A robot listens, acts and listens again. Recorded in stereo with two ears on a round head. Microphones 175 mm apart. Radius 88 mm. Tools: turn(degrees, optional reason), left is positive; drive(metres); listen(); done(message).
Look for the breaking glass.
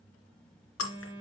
turn(degrees=90)
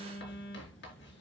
done("Facing where the breaking glass came from. I can't hear it now.")